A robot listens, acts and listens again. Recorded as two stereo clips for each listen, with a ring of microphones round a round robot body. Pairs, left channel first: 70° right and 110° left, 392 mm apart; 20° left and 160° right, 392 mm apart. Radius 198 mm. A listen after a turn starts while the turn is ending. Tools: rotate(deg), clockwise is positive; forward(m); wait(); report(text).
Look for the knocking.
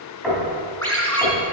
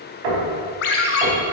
rotate(155)
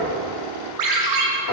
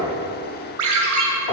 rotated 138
rotate(20)
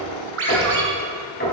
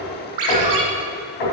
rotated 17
report("Facing the knocking.")